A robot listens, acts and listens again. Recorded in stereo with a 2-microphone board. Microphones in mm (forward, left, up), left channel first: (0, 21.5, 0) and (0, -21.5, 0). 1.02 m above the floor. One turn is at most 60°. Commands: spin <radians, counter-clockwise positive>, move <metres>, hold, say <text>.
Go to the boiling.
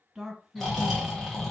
hold
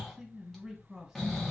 hold
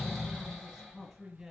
say I can't make out boiling, only snoring and a man speaking.